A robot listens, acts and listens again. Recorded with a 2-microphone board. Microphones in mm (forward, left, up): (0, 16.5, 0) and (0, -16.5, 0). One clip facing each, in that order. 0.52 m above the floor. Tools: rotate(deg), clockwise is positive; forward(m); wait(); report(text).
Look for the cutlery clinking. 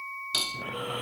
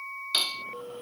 rotate(20)
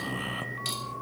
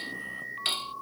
wait()
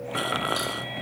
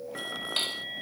wait()
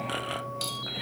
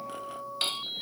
report("I heard cutlery clinking, but can't make it out now. It was about straight ahead or 140° right.")